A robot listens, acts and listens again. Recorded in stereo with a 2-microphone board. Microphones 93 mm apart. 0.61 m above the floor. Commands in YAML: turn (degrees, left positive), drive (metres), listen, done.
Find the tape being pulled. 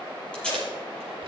turn: 30
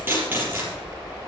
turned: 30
turn: -20
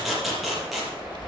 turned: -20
done: "Found it: tape being pulled, straight ahead."